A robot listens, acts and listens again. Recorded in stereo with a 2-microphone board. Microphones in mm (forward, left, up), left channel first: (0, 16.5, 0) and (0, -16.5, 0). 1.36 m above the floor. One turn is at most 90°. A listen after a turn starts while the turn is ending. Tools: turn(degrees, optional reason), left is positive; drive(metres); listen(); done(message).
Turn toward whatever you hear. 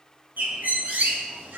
turn(degrees=-60, reason="The bird: about 60° right or 120° right.")
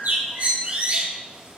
turn(degrees=-55, reason="So it is at 55° right.")
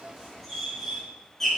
done("Facing the bird, 1 to 2 m away.")